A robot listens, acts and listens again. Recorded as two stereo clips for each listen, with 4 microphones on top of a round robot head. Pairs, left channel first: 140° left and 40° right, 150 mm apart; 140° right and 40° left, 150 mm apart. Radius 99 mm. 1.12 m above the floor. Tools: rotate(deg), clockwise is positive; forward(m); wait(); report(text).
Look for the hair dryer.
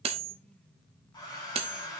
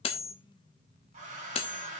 rotate(-80)
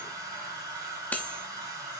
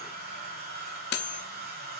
rotate(-30)
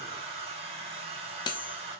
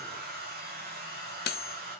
rotate(-15)
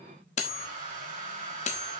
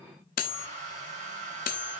report("Found it: a hair dryer, straight ahead.")